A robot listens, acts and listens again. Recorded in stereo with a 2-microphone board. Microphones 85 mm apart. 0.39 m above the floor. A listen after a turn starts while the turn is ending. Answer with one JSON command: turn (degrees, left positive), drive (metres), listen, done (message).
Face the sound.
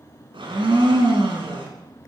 {"turn": -90}
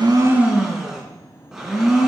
{"turn": -10}
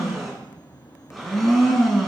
{"done": "Facing the blender, 2 to 4 m away."}